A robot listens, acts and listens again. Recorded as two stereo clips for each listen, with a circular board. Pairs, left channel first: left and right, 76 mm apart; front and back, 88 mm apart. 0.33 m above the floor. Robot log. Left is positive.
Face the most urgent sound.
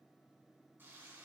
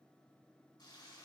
cmd idle
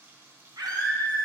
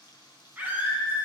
note: The scream: 110° right.
cmd yaw -110
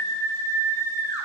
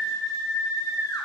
note: The scream is now 40° right.
cmd yaw -40
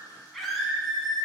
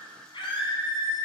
end: Facing the scream, 2 to 4 m away.